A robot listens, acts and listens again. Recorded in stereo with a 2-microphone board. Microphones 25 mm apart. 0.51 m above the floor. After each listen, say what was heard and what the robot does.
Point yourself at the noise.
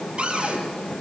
The cupboard door: about 50° right or 130° right. Turn 50° right.
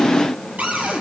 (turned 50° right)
So it is at 85° right. Turn 85° right.
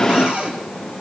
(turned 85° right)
The cupboard door is now 45° right. Turn 45° right.
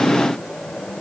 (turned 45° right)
Keep listening.
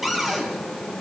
The cupboard door is now 10° right. Turn 10° right.
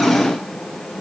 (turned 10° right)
Keep listening.
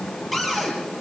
Facing the cupboard door.